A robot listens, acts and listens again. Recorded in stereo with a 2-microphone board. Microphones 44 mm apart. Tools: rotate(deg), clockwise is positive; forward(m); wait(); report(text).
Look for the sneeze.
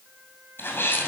rotate(-50)
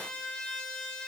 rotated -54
wait()
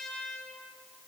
report("I heard a sneeze, but can't make it out now. It was about 5° right or 75° left.")